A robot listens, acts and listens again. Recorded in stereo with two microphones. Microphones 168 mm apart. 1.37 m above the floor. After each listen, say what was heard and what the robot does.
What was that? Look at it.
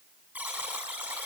Turn 30° right.
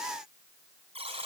So it is at 140° right. Turn 140° right.
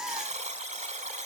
The buzzer is now 45° right. Turn 45° right.
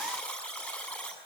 The buzzer is now 10° left. Turn 10° left.
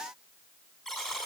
Found it: a buzzer, straight ahead, over 4 m away.